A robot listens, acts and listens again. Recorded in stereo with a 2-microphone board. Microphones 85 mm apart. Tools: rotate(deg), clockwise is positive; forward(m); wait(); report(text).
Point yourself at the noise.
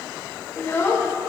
rotate(-30)
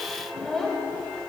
report("Found it: a child speaking, straight ahead.")